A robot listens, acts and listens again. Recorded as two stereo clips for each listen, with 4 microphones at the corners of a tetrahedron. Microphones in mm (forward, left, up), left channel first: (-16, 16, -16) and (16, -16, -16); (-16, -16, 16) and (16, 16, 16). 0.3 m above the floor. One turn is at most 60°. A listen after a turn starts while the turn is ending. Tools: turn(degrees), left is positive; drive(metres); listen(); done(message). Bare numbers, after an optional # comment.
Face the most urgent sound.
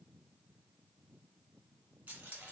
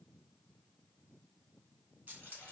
listen()
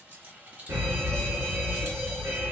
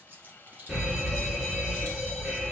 # The alarm: 35° right.
turn(-35)
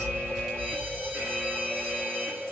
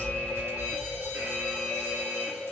done("Found it: an alarm, straight ahead, 2 to 4 m away.")